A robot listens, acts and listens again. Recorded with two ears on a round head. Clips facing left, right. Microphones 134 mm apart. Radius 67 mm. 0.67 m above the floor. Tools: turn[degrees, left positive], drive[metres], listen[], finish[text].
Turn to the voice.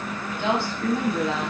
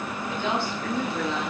Thought: The woman speaking: about 60° left or 120° left.
Action: turn[60]
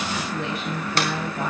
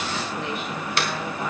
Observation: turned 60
Thought: So it is at 70° left.
Action: turn[70]
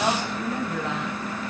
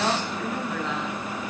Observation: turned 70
Thought: The woman speaking is now 15° left.
Action: turn[15]
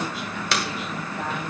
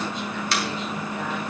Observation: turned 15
Action: listen[]
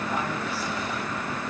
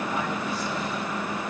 Action: listen[]
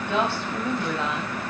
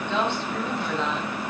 Action: finish[Facing the woman speaking, over 4 m away.]